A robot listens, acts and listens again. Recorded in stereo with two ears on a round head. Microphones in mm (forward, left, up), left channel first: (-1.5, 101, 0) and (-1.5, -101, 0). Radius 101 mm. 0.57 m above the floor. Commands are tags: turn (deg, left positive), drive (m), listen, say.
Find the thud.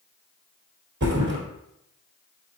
<turn deg="-55"/>
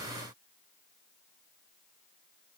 <listen/>
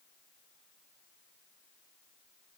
<say>I heard a thud, but can't make it out now. It was about straight ahead or 70° right.</say>